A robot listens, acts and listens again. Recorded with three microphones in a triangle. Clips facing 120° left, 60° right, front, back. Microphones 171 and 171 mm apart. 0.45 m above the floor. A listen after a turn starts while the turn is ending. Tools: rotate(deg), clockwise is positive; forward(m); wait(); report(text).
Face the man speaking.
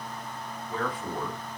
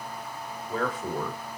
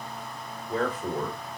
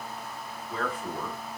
rotate(30)
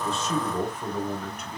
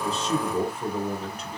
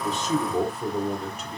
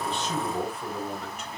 rotate(20)
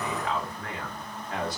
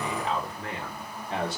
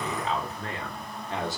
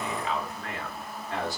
rotate(45)
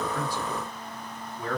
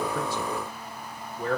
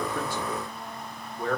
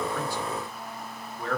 rotate(50)
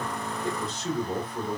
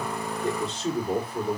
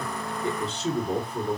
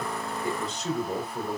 rotate(30)
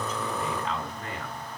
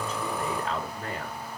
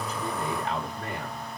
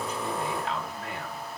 rotate(-10)
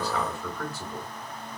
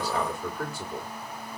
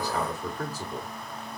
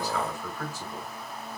report("Found it: a man speaking, straight ahead.")